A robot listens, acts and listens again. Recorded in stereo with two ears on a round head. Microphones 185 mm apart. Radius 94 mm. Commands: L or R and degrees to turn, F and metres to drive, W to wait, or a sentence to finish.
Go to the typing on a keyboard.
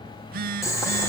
W
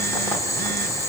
W
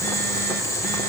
I can't make out typing on a keyboard, only boiling and a phone buzzing.